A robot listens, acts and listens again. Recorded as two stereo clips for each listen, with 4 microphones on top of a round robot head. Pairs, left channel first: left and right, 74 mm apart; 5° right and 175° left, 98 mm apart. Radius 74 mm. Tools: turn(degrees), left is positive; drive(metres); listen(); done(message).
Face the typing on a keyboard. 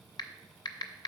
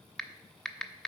turn(degrees=80)
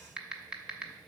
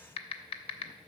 turn(degrees=-10)
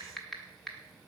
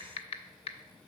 done("Found it: typing on a keyboard, straight ahead, under 1 m away.")